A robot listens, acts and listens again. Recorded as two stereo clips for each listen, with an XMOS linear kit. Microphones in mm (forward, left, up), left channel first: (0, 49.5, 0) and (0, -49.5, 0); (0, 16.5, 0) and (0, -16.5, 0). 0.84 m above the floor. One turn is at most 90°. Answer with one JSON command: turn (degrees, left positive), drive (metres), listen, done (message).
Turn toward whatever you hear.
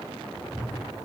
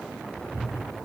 {"turn": 55}
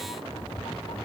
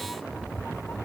{"turn": 60}
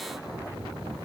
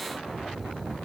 {"turn": -15}
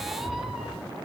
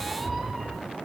{"done": "Facing the cat meowing, over 4 m away."}